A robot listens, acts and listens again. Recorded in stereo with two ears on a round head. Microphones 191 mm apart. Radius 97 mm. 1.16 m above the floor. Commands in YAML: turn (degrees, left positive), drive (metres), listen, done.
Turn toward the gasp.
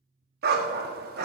listen: true
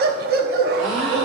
turn: -55
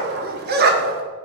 listen: true
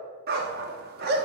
done: "I heard a gasp, but can't make it out now. It was about straight ahead or 70° right."